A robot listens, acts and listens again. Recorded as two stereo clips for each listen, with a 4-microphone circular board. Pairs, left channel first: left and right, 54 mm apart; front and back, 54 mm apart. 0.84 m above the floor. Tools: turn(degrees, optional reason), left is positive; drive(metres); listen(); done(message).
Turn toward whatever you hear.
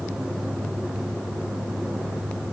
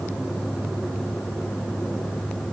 listen()
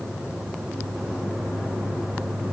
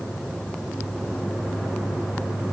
listen()
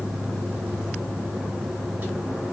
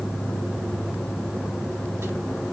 done("I can't make out anything.")